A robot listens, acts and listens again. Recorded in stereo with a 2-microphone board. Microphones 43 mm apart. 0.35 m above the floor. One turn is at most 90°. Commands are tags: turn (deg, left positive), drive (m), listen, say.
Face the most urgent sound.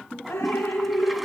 <listen/>
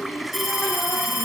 <turn deg="-30"/>
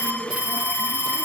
<turn deg="-90"/>
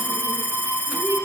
<turn deg="-55"/>
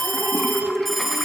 <say>Found it: an alarm, straight ahead, 2 to 4 m away.</say>